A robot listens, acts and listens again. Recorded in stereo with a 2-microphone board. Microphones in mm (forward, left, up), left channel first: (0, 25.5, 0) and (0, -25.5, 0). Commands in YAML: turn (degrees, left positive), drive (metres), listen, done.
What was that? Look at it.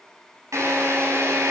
turn: -90
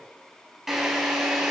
done: "Found it: a drill, straight ahead."